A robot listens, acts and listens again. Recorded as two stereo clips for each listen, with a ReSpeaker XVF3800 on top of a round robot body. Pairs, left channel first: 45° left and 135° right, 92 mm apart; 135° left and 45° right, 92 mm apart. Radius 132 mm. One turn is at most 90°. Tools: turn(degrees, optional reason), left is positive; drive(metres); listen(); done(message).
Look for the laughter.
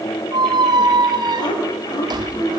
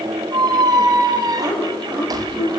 done("Found it: laughter, straight ahead, over 4 m away.")